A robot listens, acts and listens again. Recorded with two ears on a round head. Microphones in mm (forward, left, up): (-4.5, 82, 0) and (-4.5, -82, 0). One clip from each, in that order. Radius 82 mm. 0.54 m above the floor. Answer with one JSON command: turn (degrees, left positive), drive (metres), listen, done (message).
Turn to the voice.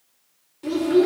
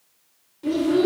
{"turn": 20}
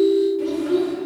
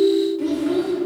{"done": "Facing the child speaking."}